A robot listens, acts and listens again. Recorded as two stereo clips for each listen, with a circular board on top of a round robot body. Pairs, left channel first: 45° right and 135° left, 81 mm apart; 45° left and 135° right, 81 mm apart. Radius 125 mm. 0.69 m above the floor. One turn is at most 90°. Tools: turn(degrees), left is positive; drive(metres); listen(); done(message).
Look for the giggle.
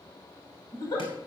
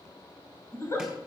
turn(degrees=-10)
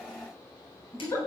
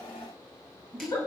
done("Facing the giggle.")